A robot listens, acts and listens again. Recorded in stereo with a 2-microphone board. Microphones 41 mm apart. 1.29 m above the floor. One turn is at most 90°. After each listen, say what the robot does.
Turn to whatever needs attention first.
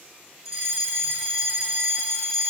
Turn 30° right.
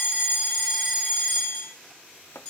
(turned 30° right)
Turn 20° left.
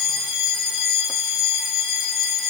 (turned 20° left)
Facing the fire alarm, over 4 m away.